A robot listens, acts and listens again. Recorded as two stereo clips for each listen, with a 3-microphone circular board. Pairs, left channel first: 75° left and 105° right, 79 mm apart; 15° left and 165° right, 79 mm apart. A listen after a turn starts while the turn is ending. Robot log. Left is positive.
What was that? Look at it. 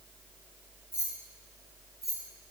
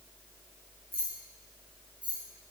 note: The keys jangling: 125° left.
cmd yaw +125
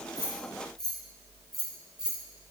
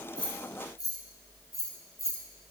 note: The keys jangling is now 25° right.
cmd yaw -25
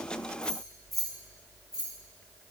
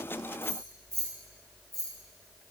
note: The keys jangling is now 20° right.
cmd yaw -20
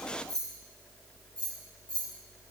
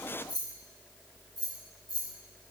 end: Found it: keys jangling, straight ahead, 1 to 2 m away.